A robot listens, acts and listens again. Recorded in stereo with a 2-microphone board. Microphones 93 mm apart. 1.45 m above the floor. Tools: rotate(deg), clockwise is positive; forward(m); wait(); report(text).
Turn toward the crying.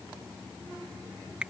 wait()
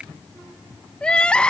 rotate(-30)
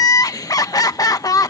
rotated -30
rotate(-135)
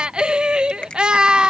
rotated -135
rotate(10)
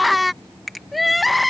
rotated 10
report("Facing the crying.")